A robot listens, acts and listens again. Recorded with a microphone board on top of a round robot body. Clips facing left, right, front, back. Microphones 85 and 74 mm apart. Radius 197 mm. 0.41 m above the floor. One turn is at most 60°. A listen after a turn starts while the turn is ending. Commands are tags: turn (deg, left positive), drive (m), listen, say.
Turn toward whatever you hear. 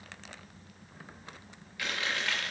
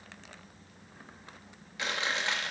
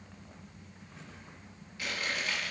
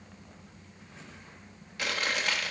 <turn deg="-60"/>
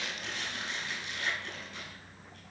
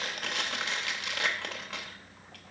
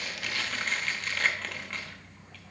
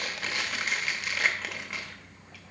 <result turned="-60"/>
<turn deg="-60"/>
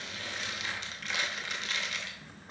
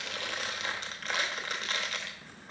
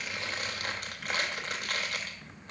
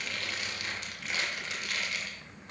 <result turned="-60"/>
<turn deg="-40"/>
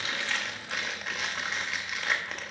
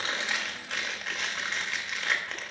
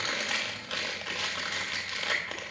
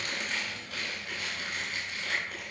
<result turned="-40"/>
<say>Facing the chewing, under 1 m away.</say>